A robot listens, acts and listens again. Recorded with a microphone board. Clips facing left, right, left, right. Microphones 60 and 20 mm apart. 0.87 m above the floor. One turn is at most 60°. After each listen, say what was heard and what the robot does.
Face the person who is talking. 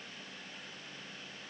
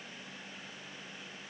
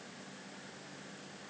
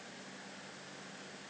Keep listening.
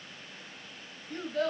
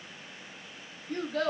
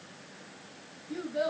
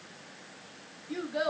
Turn 60° right.
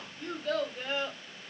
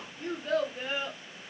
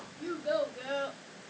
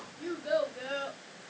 So it is at 15° right. Turn 15° right.
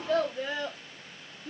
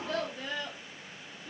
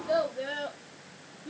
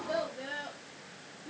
The child speaking is now 30° left. Turn 30° left.
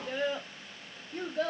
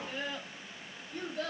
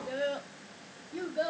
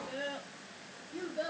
The child speaking is now 15° left. Turn 15° left.
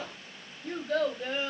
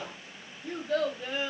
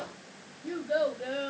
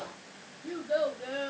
Found it: a child speaking, straight ahead.